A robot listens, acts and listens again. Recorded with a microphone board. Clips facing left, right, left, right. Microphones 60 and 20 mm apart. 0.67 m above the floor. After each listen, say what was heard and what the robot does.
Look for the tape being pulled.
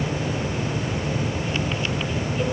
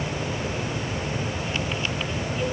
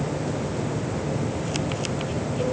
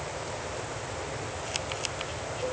Keep listening.
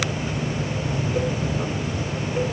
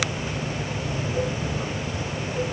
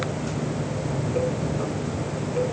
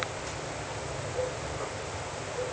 Keep listening.
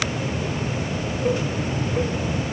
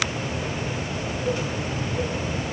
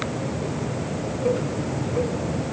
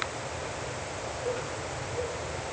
I can't make out tape being pulled to turn to.